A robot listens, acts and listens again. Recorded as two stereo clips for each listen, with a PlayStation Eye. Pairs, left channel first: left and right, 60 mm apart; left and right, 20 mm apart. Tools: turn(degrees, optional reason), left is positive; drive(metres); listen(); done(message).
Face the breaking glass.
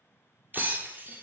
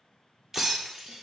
turn(degrees=-30, reason="The breaking glass: about 30° right or 150° right.")
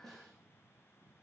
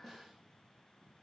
listen()
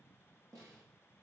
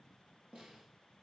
done("I heard breaking glass, but can't make it out now. It was about straight ahead or 120° right.")